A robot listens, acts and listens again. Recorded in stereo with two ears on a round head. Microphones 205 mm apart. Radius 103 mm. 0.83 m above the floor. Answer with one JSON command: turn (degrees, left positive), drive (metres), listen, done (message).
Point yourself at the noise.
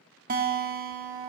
{"turn": -40}
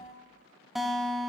{"done": "Facing the guitar."}